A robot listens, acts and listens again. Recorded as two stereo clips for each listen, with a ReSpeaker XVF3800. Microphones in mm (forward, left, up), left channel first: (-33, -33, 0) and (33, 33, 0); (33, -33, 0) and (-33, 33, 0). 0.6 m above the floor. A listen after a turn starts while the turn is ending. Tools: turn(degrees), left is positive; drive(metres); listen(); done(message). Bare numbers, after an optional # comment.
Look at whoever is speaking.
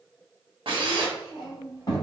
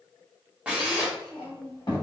# The child speaking: 90° right.
turn(-90)
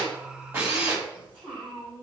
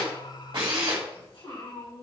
# The child speaking is now 35° right.
turn(-35)
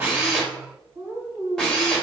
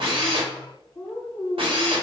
done("Facing the child speaking, 2 to 4 m away.")